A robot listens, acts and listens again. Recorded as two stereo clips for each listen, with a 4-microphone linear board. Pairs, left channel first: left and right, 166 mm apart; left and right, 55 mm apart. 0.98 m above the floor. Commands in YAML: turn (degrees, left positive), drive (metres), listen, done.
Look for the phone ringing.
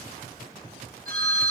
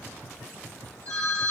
turn: -65
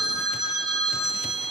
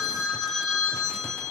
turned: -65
done: "Facing the phone ringing, over 4 m away."